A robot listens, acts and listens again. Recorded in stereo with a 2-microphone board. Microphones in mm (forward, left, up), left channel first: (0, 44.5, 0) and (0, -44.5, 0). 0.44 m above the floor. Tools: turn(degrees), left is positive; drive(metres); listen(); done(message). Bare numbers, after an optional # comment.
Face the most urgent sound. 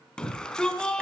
turn(30)
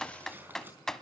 listen()
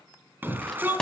# So it is at 20° right.
turn(-20)
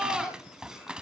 done("Found it: a shout, straight ahead, over 4 m away.")